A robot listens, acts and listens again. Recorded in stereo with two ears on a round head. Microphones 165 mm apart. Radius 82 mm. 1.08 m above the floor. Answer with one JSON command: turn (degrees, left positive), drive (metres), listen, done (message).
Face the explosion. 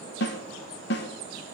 {"listen": true}
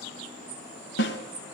{"listen": true}
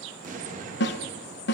{"turn": -45}
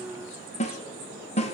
{"listen": true}
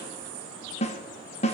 {"done": "I heard an explosion, but can't make it out now. It was about straight ahead or 90° right."}